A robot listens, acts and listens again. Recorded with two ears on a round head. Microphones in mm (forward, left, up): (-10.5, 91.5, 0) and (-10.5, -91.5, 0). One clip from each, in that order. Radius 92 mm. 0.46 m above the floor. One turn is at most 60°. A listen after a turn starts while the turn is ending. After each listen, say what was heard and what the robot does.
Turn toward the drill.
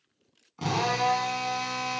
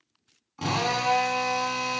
Turn 30° right.
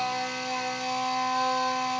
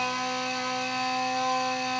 So it is at 25° left. Turn 25° left.
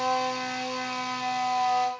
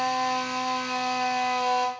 Found it: a drill, straight ahead, over 4 m away.